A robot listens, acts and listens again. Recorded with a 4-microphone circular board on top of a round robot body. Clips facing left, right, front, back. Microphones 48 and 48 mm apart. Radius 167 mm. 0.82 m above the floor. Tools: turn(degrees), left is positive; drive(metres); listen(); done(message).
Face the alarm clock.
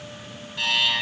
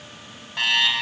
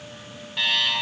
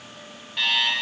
turn(degrees=-85)
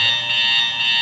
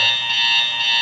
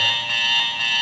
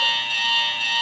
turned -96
turn(degrees=10)
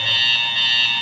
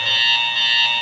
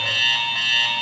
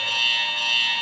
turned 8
done("Found it: an alarm clock, straight ahead.")